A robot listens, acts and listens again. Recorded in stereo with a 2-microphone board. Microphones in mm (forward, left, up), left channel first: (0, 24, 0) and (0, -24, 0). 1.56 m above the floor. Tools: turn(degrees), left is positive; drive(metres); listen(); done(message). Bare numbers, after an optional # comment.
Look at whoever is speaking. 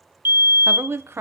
# The woman speaking: about 60° right or 120° right.
turn(-60)
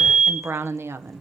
# So it is at 65° right.
turn(-65)
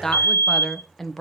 done("Facing the woman speaking, 1 to 2 m away.")